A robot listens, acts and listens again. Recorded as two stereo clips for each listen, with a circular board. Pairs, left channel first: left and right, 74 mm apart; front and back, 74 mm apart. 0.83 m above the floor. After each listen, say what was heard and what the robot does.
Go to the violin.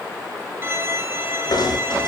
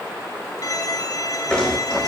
The violin: 35° right. Turn 35° right.
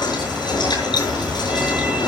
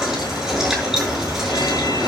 Keep listening.
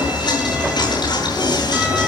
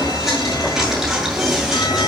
Keep listening.
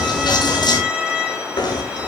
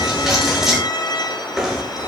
The violin is now 15° right. Turn 15° right.
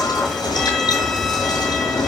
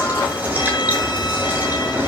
Keep listening.
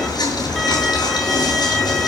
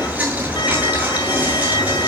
Drive 1.0 m forward.
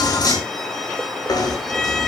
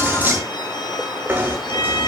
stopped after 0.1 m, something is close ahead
Blocked. The violin is further on, straight ahead.